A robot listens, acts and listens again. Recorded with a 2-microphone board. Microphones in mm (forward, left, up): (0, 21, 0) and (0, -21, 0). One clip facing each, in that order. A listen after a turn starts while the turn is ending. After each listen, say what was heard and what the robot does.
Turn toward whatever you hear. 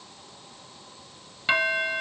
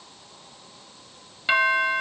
Turn 30° right.
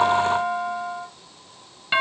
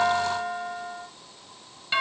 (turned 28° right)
So it is at 25° left. Turn 25° left.
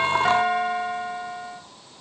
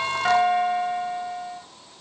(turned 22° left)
Facing the doorbell.